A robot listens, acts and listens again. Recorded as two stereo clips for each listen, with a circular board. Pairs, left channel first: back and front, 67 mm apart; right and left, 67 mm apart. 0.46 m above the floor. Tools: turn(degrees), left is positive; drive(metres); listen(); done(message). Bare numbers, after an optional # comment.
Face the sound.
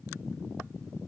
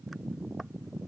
listen()
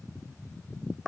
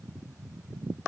listen()
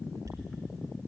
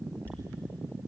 # The dropped coin: 40° left.
turn(40)
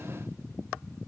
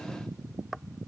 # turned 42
done("Facing where the dropped coin came from. I can't hear it now.")